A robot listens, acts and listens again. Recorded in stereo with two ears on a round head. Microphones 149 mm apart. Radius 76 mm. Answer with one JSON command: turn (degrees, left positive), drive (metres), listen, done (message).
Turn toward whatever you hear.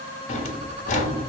{"turn": 50}
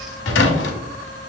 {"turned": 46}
{"turn": 85}
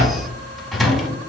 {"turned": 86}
{"done": "Facing the drawer."}